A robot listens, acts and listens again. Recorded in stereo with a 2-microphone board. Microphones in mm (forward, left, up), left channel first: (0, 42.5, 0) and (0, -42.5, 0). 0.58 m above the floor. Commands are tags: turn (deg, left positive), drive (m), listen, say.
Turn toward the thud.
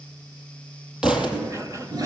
<turn deg="-30"/>
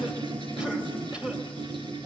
<listen/>
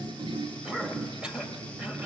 <say>I heard a thud, but can't make it out now. It was about 20° left or 140° right.</say>